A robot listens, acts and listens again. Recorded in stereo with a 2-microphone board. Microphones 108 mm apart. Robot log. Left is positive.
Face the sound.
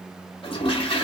note: The toilet flushing: about 55° left or 125° left.
cmd yaw +55
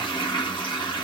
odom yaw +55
note: So it is at 55° left.
cmd yaw +55
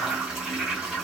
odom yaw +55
end: Facing the toilet flushing, 1 to 2 m away.